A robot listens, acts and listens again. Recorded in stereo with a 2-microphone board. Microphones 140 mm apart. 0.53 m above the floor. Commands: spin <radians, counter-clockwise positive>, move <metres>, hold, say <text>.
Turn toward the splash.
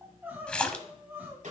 spin 0.52
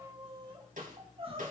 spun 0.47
hold
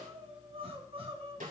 say I heard a splash, but can't make it out now. It was about 20° right or 145° left.